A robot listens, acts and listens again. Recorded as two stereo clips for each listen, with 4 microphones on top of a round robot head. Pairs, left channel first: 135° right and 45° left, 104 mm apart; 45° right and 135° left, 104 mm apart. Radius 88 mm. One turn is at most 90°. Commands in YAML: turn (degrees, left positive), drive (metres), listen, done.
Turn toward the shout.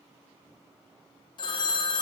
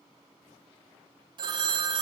listen: true
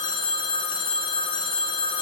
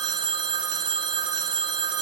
listen: true
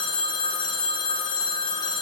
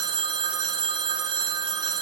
done: "I can't make out a shout to turn to."